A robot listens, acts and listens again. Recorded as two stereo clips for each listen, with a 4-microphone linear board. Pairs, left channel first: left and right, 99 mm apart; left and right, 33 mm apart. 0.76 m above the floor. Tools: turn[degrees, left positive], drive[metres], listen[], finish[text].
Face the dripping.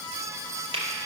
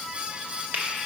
Action: listen[]
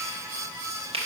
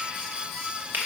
Action: listen[]
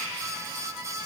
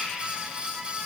Action: finish[I can't make out dripping, only a finger snap.]